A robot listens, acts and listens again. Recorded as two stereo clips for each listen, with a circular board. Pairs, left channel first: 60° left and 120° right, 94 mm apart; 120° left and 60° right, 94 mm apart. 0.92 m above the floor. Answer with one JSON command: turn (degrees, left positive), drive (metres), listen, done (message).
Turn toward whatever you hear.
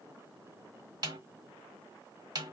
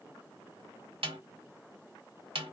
{"turn": -75}
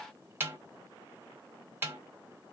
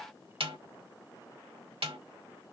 {"turn": -50}
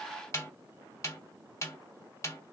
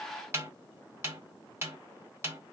{"done": "Found it: a snare drum, straight ahead."}